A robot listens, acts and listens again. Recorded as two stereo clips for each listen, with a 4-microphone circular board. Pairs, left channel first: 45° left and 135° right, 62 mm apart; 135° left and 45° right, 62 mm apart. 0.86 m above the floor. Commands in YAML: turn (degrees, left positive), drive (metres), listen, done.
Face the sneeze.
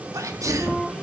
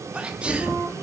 turn: -115
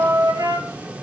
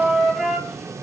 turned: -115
done: "Facing where the sneeze came from. I can't hear it now."